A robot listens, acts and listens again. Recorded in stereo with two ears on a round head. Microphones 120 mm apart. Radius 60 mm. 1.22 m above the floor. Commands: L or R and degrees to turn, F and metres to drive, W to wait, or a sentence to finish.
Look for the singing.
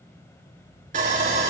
W
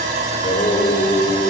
L50
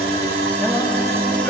L10
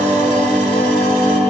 L15
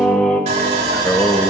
L10
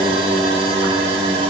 Facing the singing.